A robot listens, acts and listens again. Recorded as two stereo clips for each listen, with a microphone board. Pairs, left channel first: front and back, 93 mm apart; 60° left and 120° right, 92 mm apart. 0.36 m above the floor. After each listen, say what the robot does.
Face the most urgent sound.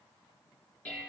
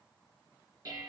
Keep listening.
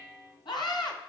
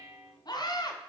Turn 25° left.
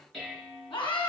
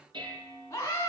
Facing the scream.